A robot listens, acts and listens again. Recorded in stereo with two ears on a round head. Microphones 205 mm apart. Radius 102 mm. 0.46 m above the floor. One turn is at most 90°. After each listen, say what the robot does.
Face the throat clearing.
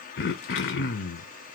Turn 45° left.
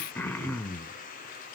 Turn 10° left.
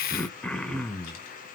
Facing the throat clearing.